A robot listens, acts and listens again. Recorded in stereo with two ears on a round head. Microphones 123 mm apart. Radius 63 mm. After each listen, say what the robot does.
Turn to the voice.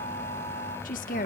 Turn 70° left.
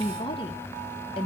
Turn 40° left.
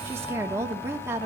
Turn 20° right.
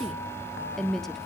Found it: a woman speaking, straight ahead.